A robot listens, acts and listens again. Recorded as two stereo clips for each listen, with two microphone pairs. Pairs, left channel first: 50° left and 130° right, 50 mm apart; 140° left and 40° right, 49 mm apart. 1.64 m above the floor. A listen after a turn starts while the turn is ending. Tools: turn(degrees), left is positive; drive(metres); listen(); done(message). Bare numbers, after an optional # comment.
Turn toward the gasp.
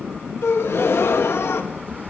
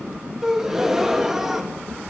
# The gasp: 40° left.
turn(40)
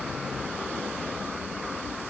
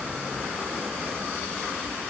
done("I heard a gasp from this way, but can't make it out now.")